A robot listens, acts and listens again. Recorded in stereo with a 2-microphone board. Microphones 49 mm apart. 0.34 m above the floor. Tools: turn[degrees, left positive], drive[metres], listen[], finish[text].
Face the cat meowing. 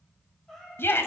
Action: turn[30]
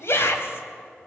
Action: listen[]
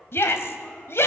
Action: listen[]
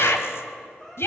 Thought: So it is at 160° left.
Action: turn[160]
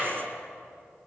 Action: listen[]
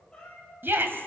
Thought: The cat meowing is now 20° left.
Action: turn[20]
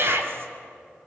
Action: listen[]
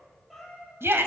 Action: finish[Found it: a cat meowing, straight ahead, over 4 m away.]